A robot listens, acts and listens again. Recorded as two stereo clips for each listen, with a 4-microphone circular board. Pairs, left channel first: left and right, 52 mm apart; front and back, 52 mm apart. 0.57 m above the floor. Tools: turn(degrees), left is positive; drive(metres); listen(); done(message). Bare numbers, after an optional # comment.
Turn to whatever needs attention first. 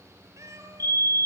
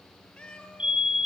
# The fire alarm: 110° left.
turn(110)
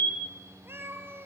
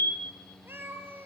# The fire alarm is now 50° left.
turn(50)
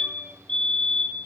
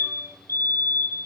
# The fire alarm is now 20° left.
turn(20)
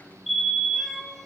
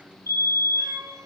done("Facing the fire alarm, 2 to 4 m away.")